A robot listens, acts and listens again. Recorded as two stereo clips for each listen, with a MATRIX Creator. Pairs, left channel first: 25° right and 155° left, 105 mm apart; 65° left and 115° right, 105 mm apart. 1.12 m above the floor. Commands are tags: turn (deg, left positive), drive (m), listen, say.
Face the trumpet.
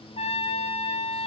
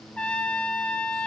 <turn deg="-15"/>
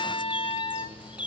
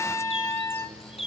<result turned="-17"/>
<say>Found it: a trumpet, straight ahead.</say>